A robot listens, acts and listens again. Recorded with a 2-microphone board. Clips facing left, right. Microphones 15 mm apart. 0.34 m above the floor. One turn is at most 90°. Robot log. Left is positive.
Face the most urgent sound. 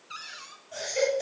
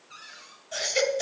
note: The baby crying: about 45° right or 135° right.
cmd yaw -45
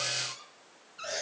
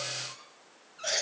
note: So it is at 85° right.
cmd yaw -85
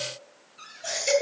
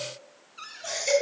end: Facing the baby crying.